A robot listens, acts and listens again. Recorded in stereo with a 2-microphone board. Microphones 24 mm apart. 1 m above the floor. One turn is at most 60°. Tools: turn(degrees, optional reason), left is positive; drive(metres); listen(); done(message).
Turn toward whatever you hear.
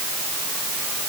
listen()
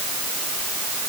listen()
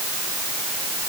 done("I can't make out anything to turn to.")